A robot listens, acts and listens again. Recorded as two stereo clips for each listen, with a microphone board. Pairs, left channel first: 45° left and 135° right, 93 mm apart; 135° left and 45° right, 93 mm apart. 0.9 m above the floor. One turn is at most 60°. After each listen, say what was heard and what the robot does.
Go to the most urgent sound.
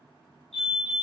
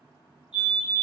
The fire alarm: 125° left. Turn 60° left.
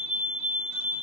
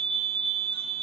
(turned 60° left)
The fire alarm is now 55° left. Turn 55° left.
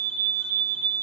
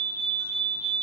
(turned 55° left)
The fire alarm is now 30° left. Turn 30° left.
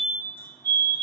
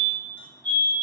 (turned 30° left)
The fire alarm is now 15° right. Turn 15° right.
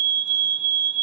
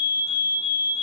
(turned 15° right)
Drive 1.0 m forward.
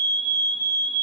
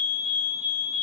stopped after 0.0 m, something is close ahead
Blocked. The fire alarm is further on, straight ahead.